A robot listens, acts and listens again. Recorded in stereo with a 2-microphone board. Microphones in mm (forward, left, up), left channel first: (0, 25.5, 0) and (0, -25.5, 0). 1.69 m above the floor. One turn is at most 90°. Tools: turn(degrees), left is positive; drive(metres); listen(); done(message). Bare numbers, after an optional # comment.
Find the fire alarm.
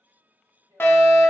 # The fire alarm: about 40° left or 140° left.
turn(40)
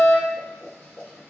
# So it is at 95° left.
turn(90)
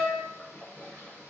done("Found it: a fire alarm, straight ahead.")